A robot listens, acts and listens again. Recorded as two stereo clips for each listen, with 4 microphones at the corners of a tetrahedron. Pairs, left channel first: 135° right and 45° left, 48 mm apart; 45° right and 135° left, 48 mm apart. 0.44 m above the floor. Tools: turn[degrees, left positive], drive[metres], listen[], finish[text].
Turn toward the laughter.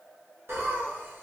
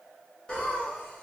Thought: The laughter: 20° left.
Action: turn[20]
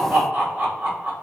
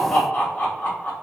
Action: finish[Facing the laughter, 1 to 2 m away.]